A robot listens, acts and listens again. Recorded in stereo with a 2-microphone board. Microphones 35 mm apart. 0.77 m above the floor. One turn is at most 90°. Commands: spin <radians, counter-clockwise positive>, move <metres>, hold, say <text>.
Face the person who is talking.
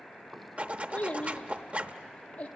spin 0.70
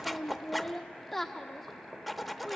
say Found it: a child speaking, straight ahead.